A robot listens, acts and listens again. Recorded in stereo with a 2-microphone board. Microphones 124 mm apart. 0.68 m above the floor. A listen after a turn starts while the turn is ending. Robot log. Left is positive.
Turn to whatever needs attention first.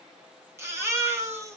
note: The baby crying: about 20° right or 160° right.
cmd yaw -20
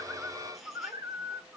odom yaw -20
cmd idle
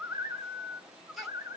cmd idle
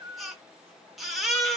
end: Found it: a baby crying, straight ahead, 1 to 2 m away.